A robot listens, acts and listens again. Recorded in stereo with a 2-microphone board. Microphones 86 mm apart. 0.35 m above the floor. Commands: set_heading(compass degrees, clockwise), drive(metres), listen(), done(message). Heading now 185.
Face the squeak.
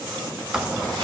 set_heading(215)
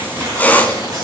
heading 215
set_heading(195)
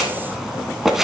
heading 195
done("Facing the squeak.")